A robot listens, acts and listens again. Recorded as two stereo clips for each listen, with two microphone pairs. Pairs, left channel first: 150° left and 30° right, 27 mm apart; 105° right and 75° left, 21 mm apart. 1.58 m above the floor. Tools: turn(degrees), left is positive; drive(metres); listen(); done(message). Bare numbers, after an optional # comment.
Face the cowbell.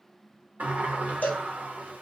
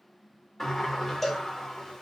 # The cowbell: 175° left.
turn(175)
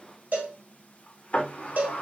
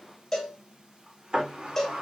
# The cowbell is now 40° right.
turn(-40)
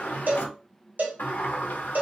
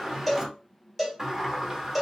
# The cowbell is now 10° right.
turn(-10)
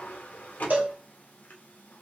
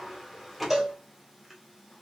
done("Facing the cowbell.")